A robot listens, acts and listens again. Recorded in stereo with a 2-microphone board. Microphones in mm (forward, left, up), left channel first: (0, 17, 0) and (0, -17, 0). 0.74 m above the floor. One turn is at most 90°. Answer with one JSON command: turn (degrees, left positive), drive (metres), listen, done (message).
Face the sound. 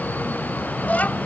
{"turn": 50}
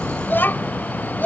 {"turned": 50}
{"turn": 80}
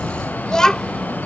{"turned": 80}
{"turn": 20}
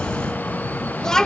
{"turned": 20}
{"turn": 20}
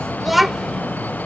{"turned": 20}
{"done": "Facing the child speaking."}